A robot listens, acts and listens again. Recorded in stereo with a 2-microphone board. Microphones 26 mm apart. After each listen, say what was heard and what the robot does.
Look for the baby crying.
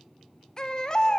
The baby crying: about 30° left or 150° left. Turn 30° left.
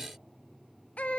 So it is at 115° left. Turn 115° left.
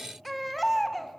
Found it: a baby crying, straight ahead.